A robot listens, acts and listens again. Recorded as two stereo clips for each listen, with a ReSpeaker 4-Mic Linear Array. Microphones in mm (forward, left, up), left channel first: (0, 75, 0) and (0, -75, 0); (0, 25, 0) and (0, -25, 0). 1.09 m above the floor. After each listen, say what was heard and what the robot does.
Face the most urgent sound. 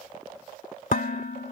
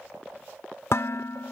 Keep listening.
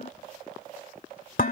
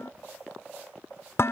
Keep listening.
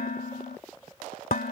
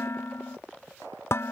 I can't make out anything urgent to turn to.